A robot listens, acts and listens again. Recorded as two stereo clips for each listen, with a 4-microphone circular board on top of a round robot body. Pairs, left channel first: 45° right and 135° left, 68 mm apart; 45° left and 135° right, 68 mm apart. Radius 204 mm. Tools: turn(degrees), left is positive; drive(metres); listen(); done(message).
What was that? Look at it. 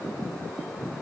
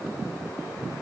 listen()
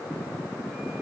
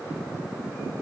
listen()
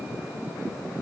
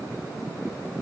done("I can't make out anything.")